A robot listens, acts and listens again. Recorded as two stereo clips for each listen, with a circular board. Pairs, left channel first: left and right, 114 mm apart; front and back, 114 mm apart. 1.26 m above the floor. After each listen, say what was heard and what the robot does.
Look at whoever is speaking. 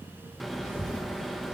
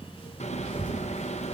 The child speaking: 80° left. Turn 80° left.
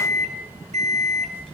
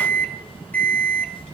Found it: a child speaking, straight ahead.